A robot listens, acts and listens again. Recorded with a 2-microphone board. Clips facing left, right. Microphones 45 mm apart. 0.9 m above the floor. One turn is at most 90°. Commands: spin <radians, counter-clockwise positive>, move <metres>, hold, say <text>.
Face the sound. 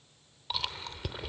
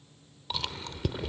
spin 0.52
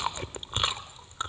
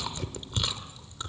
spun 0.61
spin 1.57
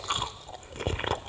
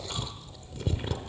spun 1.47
spin 1.05
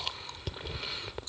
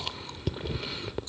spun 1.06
say Found it: chewing, straight ahead, under 1 m away.